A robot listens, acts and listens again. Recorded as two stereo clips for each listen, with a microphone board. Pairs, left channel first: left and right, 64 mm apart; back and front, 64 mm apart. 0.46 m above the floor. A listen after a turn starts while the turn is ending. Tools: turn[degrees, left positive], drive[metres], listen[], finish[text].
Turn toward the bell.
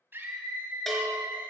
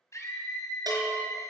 Action: finish[Facing the bell.]